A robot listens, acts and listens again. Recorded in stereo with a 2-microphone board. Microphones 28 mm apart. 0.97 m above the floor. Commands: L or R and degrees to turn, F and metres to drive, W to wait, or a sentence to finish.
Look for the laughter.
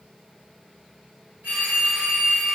W
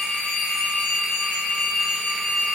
W
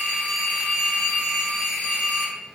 I can't make out laughter, only a phone ringing.